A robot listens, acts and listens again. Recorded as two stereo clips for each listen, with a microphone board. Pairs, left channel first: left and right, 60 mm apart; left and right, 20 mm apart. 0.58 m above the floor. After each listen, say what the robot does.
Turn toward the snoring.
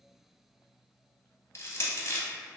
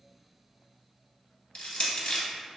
Keep listening.
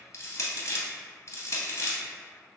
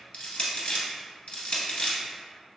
Keep listening.
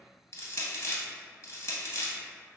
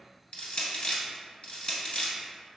I can't make out snoring to turn to.